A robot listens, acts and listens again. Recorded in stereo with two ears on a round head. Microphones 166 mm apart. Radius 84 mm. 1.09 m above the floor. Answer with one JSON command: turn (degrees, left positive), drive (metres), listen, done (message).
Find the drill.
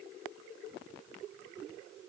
{"listen": true}
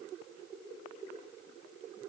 {"listen": true}
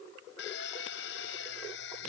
{"turn": 70}
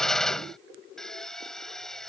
{"done": "Facing the drill."}